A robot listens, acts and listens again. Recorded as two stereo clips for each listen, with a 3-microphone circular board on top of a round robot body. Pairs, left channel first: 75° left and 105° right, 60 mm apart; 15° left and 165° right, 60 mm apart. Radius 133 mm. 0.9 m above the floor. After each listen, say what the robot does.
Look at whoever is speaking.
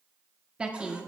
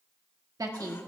Turn 180° left.
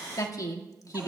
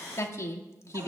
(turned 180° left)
Turn 55° left.
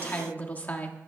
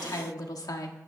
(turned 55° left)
Turn 10° left.
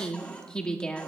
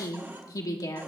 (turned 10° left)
Found it: a woman speaking, straight ahead.